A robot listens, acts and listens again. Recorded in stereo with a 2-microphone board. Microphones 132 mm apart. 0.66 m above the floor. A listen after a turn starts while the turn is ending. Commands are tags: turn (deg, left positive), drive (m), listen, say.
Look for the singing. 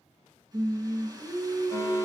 <turn deg="-65"/>
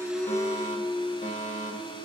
<say>Facing the singing, 2 to 4 m away.</say>